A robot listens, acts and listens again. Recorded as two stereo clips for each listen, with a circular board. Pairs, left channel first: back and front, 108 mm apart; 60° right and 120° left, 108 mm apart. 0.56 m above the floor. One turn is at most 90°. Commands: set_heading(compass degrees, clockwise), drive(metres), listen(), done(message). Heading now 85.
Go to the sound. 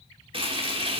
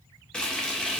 set_heading(65)
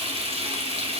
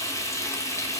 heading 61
drive(1.0)
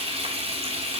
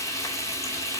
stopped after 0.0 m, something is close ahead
done("Something is in my way. I am facing the frying but have not reached it.")